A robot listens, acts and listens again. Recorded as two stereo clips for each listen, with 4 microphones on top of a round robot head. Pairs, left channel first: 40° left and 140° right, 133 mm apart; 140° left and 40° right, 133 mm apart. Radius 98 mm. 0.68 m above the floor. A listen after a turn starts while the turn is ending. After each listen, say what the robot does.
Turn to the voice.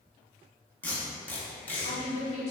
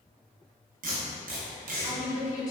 Turn 75° left.
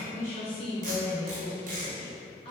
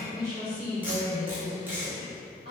Facing the woman speaking, 1 to 2 m away.